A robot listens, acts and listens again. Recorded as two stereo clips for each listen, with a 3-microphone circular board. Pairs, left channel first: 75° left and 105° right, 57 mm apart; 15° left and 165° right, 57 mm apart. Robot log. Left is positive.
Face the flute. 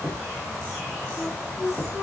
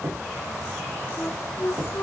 note: The flute: 35° right.
cmd yaw -35
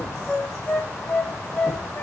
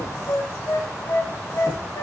end: Facing the flute, 1 to 2 m away.